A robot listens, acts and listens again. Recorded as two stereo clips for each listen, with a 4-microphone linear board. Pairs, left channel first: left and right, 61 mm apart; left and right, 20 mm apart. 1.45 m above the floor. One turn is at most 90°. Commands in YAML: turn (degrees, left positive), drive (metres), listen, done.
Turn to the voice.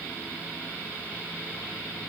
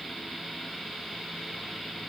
listen: true
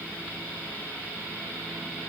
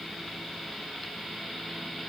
listen: true
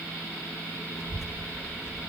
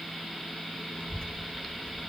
turn: 50
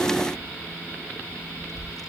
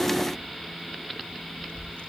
turn: 75
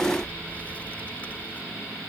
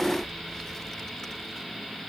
listen: true
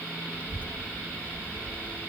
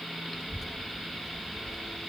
turn: 25
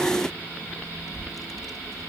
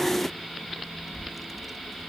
done: "Found it: a child speaking, straight ahead."